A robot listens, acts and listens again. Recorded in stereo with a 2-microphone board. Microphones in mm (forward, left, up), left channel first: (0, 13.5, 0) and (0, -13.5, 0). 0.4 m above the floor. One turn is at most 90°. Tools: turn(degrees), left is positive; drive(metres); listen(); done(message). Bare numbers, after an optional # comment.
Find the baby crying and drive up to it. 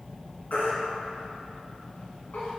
# The baby crying: about 75° left or 105° left.
turn(75)
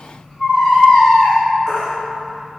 # So it is at 25° left.
turn(25)
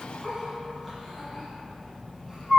drive(1.0)
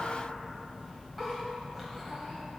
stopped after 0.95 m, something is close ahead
listen()
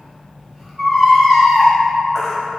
done("I am next to the baby crying.")